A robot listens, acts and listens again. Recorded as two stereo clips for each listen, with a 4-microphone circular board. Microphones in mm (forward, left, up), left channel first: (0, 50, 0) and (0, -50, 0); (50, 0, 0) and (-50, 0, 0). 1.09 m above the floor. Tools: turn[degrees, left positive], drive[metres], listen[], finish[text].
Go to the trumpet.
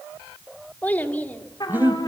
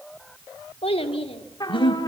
Thought: The trumpet: 45° left.
Action: turn[45]
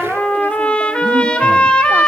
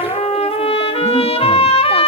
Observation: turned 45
Thought: The trumpet is now 10° left.
Action: turn[10]
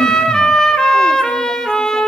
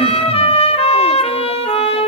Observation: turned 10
Action: drive[1.0]
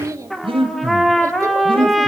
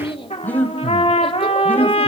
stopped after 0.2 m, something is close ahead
Action: finish[Something is in my way. I am facing the trumpet but have not reached it.]